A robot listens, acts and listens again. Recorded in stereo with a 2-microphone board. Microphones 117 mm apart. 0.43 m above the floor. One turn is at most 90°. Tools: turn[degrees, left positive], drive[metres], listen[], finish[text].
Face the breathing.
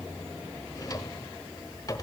Action: listen[]
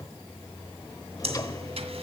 Action: listen[]
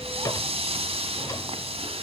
Thought: The breathing: about 65° right or 115° right.
Action: turn[-65]
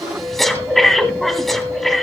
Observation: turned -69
Action: finish[Facing the breathing, 1 to 2 m away.]